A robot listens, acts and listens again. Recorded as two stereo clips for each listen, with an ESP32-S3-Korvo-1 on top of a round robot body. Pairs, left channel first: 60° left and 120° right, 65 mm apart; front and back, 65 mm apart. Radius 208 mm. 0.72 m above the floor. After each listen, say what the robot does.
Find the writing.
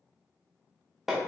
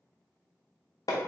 Keep listening.
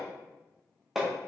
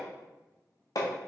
Keep listening.
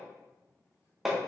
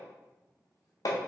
I can't make out writing to turn to.